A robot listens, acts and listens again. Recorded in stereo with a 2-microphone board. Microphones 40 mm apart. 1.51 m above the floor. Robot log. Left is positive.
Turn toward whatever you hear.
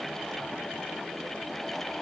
cmd idle
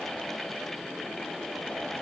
cmd idle
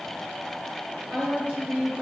note: The woman speaking: about 55° right or 125° right.
cmd yaw -55
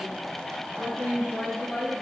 end: Found it: a woman speaking, straight ahead.